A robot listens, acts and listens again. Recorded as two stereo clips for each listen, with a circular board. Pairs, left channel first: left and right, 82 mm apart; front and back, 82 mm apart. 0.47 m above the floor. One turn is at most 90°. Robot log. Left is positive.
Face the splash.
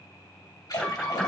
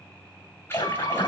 note: The splash: 55° left.
cmd yaw +55
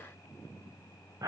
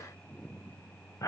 end: I heard a splash from this way, but can't make it out now.